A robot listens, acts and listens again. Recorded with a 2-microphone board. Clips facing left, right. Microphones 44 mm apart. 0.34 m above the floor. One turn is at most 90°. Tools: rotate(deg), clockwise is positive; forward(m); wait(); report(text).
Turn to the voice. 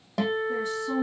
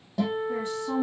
rotate(40)
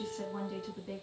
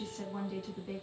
report("Found it: a woman speaking, straight ahead, 2 to 4 m away.")